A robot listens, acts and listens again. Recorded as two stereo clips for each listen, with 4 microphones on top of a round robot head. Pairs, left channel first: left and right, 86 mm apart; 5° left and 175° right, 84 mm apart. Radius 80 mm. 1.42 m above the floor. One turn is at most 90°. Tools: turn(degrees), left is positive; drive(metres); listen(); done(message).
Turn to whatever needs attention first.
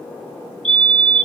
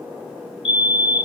turn(degrees=10)
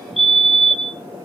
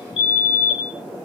done("Found it: a fire alarm, straight ahead.")